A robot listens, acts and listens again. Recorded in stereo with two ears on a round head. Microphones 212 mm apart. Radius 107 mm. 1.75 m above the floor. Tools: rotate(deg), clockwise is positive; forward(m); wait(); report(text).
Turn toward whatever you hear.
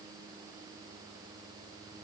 wait()
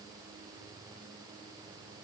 wait()
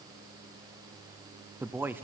rotate(30)
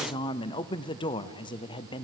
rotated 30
rotate(-20)
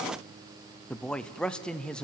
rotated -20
report("Found it: a man speaking, straight ahead.")